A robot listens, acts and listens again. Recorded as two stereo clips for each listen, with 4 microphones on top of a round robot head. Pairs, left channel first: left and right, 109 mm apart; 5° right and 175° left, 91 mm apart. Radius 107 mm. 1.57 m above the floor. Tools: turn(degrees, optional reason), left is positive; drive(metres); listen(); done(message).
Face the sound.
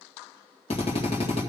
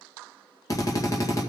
turn(degrees=50, reason="The drill: 50° left.")
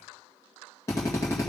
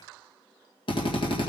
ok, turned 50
turn(degrees=20, reason="The drill is now 20° left.")
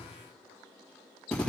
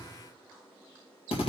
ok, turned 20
done("Found it: a drill, straight ahead, 1 to 2 m away.")